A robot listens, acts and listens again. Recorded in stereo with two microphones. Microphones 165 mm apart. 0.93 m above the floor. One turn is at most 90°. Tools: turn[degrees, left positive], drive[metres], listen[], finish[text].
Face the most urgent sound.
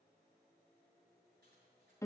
Action: listen[]
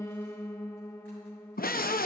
Thought: The scream: about 60° left or 120° left.
Action: turn[60]
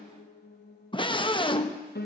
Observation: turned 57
Thought: So it is at 35° left.
Action: turn[35]
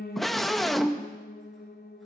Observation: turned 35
Action: finish[Facing the scream.]